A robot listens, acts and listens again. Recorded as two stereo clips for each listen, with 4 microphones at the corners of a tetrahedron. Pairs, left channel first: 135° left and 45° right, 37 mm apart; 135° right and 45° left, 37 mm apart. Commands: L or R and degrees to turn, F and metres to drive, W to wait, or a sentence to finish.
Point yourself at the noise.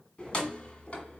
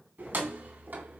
L80
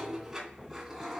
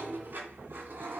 L40
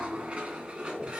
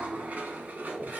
L15
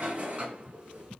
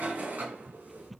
L10
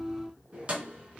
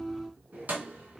L10
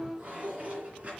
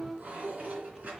Facing the keys jangling.